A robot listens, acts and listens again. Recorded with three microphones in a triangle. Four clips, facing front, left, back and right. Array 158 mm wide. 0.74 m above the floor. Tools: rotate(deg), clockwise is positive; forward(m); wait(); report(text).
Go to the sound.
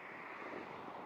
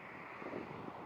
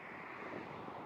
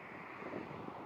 wait()
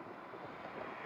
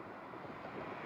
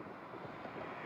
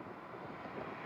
wait()
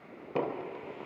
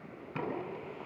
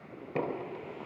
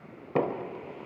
rotate(80)
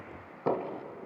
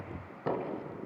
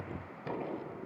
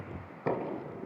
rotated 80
forward(1.0)
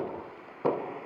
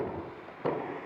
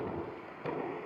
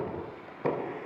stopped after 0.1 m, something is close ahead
report("Something is in my way. I am facing the knocking but have not reached it.")